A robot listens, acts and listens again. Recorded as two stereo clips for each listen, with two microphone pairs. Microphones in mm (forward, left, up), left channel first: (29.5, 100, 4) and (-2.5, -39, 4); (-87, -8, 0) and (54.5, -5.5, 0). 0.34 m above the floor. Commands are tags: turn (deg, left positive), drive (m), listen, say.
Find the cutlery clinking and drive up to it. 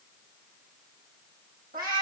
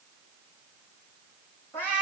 <listen/>
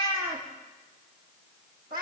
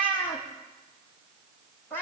<listen/>
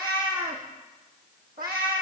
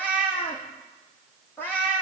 <say>I can't make out cutlery clinking, only a cat meowing.</say>